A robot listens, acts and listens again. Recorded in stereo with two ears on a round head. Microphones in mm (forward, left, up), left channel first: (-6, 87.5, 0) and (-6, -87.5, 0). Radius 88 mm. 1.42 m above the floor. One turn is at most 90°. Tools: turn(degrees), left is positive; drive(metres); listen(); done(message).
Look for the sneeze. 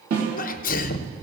turn(degrees=45)
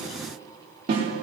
listen()
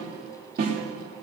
done("I heard a sneeze, but can't make it out now. It was about straight ahead or 90° left.")